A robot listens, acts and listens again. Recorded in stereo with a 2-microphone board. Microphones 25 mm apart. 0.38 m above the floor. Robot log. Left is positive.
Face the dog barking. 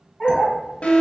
cmd yaw +30
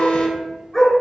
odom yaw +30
note: The dog barking: about 15° left or 165° left.
cmd yaw +15
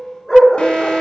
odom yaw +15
cmd yaw +30
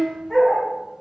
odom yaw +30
cmd yaw +30
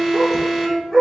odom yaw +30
cmd yaw +30
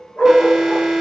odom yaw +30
note: So it is at 145° left.
cmd yaw +145
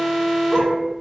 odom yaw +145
cmd idle
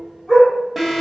end: Found it: a dog barking, straight ahead.